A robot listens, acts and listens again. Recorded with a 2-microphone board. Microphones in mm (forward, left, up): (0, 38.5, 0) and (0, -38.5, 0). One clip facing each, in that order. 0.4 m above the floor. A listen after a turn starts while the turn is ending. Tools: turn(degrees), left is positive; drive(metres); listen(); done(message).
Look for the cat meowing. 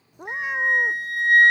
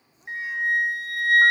turn(degrees=65)
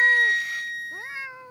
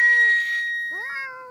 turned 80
turn(degrees=-20)
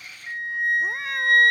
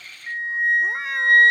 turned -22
listen()
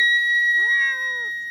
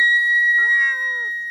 listen()
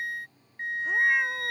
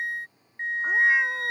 done("Facing where the cat meowing came from. I can't hear it now.")